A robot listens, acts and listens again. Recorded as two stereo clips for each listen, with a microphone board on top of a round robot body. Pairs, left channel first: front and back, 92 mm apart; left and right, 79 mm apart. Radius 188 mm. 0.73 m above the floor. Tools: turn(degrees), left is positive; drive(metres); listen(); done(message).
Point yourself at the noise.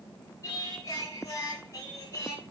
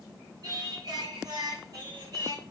turn(degrees=-60)
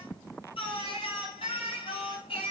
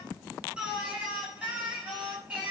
turn(degrees=-15)
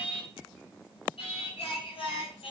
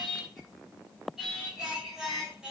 done("Facing the singing.")